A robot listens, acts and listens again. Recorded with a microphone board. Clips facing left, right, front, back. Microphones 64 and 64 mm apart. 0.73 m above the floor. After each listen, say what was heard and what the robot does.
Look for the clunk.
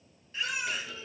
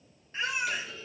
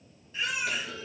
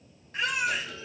The clunk: 15° left. Turn 15° left.
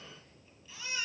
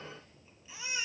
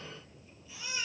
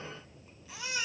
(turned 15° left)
I heard a clunk from this way, but can't make it out now.